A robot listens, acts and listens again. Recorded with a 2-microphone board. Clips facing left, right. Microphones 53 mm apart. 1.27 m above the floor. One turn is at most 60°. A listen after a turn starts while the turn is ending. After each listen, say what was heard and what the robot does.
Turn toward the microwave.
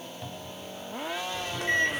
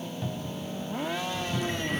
Turn 60° left.
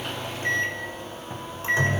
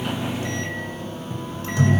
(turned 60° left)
So it is at 30° left. Turn 30° left.
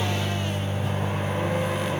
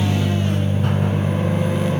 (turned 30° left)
Facing the microwave, over 4 m away.